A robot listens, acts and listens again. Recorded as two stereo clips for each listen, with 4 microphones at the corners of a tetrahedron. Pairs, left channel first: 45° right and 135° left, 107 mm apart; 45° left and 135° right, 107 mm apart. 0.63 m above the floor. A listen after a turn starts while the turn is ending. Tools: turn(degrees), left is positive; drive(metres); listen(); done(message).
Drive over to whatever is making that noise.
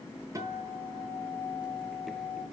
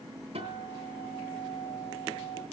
turn(degrees=-165)
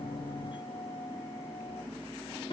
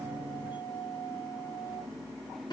drive(metres=1.0)
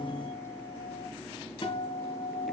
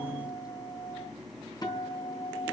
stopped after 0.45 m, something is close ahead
turn(degrees=-10)
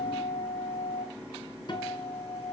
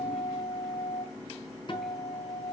done("Blocked. The guitar is further on, straight ahead.")